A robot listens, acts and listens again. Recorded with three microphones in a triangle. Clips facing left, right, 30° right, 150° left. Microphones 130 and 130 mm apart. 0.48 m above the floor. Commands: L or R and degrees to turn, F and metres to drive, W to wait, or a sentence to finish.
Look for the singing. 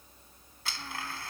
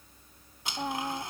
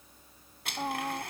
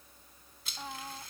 R75
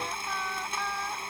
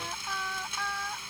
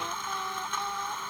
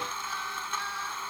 L15
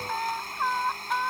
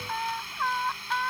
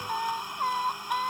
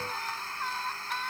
L15
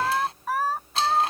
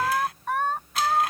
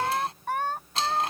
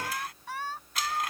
Facing the singing.